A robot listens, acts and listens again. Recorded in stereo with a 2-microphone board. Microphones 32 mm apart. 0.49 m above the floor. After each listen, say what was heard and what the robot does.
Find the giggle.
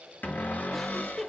Turn 30° left.
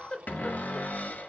So it is at 140° left. Turn 140° left.
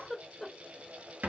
The giggle is now 10° left. Turn 10° left.
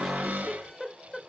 Facing the giggle, under 1 m away.